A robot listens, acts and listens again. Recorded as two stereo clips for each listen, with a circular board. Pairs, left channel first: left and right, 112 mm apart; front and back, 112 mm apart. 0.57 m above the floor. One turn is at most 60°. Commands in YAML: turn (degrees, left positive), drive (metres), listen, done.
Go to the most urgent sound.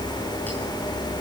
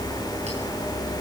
listen: true
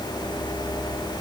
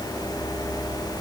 listen: true
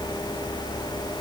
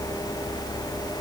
done: "I can't make out anything urgent to turn to."